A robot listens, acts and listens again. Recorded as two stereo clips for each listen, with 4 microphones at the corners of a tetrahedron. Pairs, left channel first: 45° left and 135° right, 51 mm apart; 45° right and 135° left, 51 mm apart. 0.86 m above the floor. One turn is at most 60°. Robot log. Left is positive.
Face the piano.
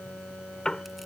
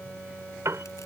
note: The piano: 120° left.
cmd yaw +60
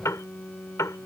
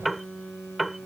note: The piano is now 50° left.
cmd yaw +50
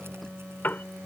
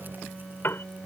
end: Found it: a piano, straight ahead.